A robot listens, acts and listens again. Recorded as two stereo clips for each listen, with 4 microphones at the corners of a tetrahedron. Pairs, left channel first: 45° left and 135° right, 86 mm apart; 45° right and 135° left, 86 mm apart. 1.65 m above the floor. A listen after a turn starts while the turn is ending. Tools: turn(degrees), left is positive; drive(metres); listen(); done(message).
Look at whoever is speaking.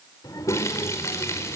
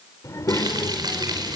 done("Found it: a child speaking, straight ahead, 2 to 4 m away.")